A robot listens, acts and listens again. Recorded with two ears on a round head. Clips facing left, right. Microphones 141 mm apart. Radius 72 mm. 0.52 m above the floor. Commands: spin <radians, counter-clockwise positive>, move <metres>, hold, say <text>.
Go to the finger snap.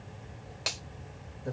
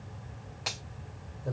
spin 0.61
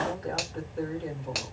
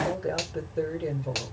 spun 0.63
move 1.0
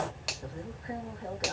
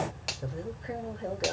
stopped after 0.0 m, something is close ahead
say Something is in my way. I am facing the finger snap but have not reached it.